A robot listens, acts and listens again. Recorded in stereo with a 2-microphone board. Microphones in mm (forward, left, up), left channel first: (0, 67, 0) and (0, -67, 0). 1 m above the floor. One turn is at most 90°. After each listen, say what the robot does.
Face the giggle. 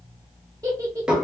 Turn 25° right.
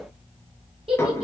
Turn 90° right.
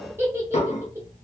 Turn 20° right.
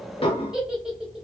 Found it: a giggle, straight ahead, under 1 m away.